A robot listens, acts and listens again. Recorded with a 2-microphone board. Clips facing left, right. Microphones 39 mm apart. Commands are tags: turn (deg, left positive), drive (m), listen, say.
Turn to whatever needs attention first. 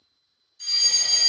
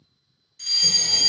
<turn deg="-65"/>
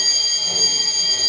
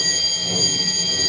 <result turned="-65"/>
<turn deg="-20"/>
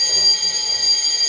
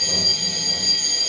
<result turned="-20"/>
<say>Found it: a fire alarm, straight ahead, 1 to 2 m away.</say>